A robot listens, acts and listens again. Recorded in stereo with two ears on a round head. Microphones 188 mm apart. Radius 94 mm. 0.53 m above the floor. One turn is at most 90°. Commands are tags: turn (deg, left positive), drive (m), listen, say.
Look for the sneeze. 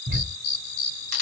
<listen/>
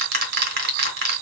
<listen/>
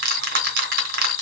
<say>I can't make out a sneeze, only ticking.</say>